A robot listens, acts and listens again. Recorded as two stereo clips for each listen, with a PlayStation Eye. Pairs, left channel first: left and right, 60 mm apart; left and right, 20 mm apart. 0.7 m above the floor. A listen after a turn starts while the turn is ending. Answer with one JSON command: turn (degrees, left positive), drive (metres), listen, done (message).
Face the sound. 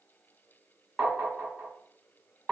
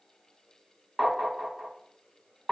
{"turn": -20}
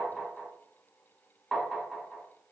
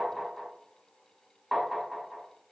{"done": "Facing the tapping."}